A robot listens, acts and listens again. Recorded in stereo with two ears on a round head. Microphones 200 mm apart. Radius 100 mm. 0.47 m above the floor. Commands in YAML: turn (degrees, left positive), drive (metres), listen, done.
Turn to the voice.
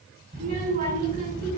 turn: -40
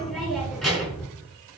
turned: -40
done: "Found it: a child speaking, straight ahead."